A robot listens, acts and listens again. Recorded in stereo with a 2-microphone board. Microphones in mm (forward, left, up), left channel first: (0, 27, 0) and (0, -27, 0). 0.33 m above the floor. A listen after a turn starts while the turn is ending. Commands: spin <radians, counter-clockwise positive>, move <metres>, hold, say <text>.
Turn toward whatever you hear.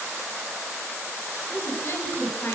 spin 0.70
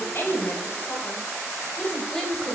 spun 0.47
say Found it: a woman speaking, straight ahead, 1 to 2 m away.